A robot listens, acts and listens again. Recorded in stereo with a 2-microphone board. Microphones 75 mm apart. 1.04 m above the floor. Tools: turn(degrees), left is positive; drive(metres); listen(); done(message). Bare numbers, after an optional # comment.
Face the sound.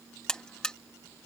turn(30)
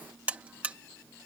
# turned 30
# So it is at 20° right.
turn(-20)
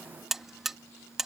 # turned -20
done("Found it: a buzzer, straight ahead.")